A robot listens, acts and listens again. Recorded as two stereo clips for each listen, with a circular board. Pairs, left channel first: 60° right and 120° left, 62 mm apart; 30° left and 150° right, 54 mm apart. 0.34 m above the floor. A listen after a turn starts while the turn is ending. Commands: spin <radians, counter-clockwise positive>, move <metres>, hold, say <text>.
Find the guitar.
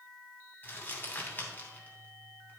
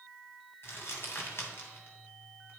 hold
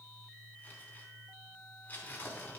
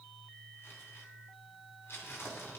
hold
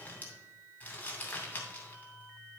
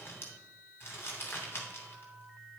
say I can't make out a guitar, only crumpling.